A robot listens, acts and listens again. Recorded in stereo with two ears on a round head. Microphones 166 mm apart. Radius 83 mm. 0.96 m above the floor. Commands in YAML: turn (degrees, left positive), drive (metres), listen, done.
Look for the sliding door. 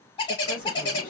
turn: 50
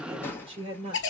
turn: 15
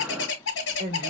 listen: true
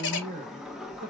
done: "Found it: a sliding door, straight ahead, under 1 m away."